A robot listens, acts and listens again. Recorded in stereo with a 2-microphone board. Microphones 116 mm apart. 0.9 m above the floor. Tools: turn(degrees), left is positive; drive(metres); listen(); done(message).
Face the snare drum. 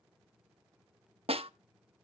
turn(degrees=-55)
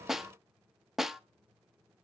done("Found it: a snare drum, straight ahead, under 1 m away.")